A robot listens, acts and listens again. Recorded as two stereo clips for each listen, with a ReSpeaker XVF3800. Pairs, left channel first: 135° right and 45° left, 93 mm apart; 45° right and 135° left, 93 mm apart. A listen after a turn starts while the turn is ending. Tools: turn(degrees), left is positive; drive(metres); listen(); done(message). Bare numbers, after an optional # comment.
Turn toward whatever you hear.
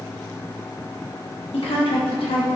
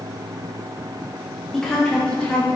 # The woman speaking: 125° right.
turn(-125)
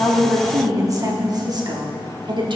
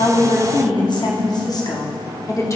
# The woman speaking is now 10° left.
turn(10)
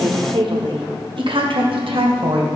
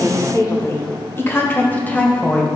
# The woman speaking is now 25° left.
turn(25)
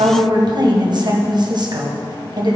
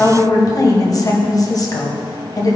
done("Found it: a woman speaking, straight ahead.")